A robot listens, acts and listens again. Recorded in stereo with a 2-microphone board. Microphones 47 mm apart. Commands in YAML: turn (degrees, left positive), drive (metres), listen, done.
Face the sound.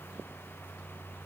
listen: true
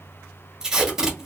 turn: -30
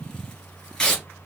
turn: 20
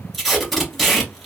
done: "Facing the tape being pulled."